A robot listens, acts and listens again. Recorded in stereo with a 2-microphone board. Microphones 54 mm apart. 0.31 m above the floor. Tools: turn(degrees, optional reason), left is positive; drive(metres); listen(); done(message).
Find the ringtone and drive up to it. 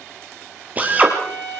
listen()
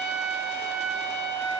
listen()
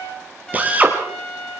done("I can't make out a ringtone, only a trumpet and a drill.")